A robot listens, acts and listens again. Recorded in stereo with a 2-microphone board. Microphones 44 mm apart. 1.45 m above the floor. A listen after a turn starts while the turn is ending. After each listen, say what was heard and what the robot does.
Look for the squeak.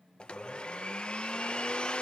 Keep listening.
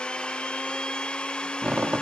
The squeak: about 25° right or 155° right. Turn 25° right.
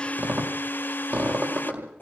So it is at 130° right. Turn 130° right.
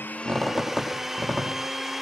The squeak is now 10° left. Turn 10° left.
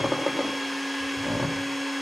Facing the squeak, over 4 m away.